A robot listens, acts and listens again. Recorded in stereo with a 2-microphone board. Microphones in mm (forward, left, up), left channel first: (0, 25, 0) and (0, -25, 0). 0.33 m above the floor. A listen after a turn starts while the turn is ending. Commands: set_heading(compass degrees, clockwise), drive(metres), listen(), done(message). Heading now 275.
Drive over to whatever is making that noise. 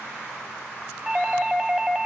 set_heading(305)
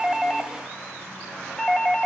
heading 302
set_heading(287)
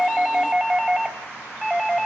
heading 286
drive(1.0)
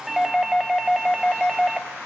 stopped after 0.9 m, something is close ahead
done("Arrived at the doorbell, straight ahead.")